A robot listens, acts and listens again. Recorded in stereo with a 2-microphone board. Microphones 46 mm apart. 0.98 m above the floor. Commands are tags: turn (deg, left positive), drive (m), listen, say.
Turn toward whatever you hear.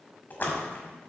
<turn deg="45"/>
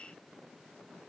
<listen/>
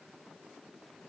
<say>I heard a splash, but can't make it out now. It was about straight ahead or 90° left.</say>